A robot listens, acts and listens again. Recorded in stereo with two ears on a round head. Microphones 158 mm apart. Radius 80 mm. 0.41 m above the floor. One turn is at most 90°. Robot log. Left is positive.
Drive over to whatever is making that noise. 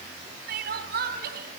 note: The crying: about 60° right or 120° right.
cmd yaw -60
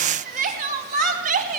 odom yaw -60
note: So it is at 50° right.
cmd yaw -50
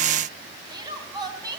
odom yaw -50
note: The crying is now 25° right.
cmd yaw -25
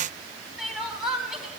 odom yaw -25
cmd fwd 1.0
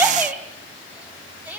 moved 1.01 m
note: The crying is now 10° right.
cmd yaw -10
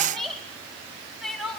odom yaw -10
cmd fwd 1.0
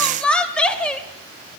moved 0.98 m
cmd fwd 1.0
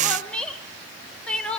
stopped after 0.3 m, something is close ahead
note: The crying is now 10° left.
cmd yaw +10
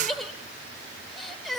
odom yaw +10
end: I am next to the crying.